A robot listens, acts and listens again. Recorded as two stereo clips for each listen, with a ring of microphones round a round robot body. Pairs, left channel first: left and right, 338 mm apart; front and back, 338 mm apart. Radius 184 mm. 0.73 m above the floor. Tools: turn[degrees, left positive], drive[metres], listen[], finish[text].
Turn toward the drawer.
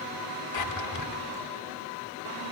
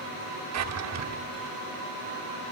Thought: The drawer: 135° left.
Action: turn[135]
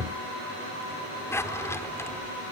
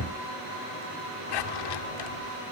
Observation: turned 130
Action: finish[Facing the drawer, 1 to 2 m away.]